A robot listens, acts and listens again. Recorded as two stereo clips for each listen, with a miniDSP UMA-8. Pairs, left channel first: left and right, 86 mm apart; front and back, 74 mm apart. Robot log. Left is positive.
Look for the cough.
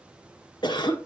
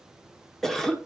note: The cough: 85° left.
cmd yaw +85
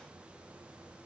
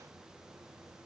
cmd idle
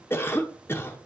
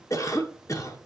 note: The cough is now 30° left.
cmd yaw +30
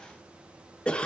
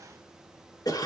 note: The cough is now 15° left.
cmd yaw +15
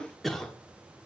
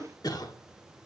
end: Found it: a cough, straight ahead, 1 to 2 m away.